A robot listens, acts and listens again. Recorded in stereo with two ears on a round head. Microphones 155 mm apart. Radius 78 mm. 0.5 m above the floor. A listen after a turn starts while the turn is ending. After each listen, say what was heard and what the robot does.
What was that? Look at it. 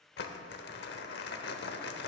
The crumpling: about 65° left or 115° left. Turn 65° left.
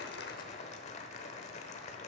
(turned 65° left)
So it is at 40° left. Turn 40° left.
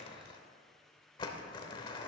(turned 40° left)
The crumpling is now 25° left. Turn 25° left.
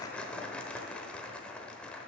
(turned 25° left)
Facing the crumpling.